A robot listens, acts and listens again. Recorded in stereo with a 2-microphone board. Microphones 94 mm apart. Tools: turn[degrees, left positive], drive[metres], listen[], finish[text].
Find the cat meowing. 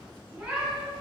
Action: turn[-30]
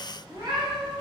Thought: So it is at 125° right.
Action: turn[-125]
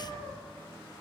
Thought: The cat meowing is now 15° left.
Action: turn[15]
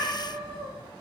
Thought: The cat meowing is now 10° left.
Action: turn[10]
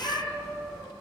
Action: finish[Facing the cat meowing.]